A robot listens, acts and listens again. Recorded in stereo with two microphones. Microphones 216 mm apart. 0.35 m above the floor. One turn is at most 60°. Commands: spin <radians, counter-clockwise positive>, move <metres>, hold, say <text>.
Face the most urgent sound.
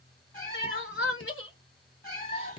spin 1.05
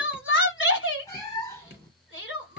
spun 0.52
spin 1.05
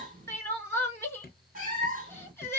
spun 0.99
spin 0.17
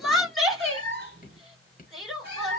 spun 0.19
say Found it: crying, straight ahead.